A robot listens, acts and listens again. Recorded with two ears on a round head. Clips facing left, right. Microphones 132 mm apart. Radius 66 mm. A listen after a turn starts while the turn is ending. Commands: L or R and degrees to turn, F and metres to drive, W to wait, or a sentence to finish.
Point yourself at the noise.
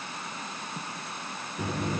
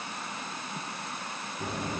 L60
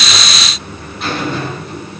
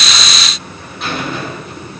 Found it: a buzzer, straight ahead.